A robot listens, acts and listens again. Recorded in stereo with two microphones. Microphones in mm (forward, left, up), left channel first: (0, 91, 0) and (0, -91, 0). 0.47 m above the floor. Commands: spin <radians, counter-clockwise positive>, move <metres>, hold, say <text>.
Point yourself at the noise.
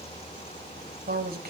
spin -0.96
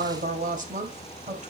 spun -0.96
spin -0.70
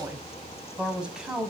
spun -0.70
say Found it: a woman speaking, straight ahead.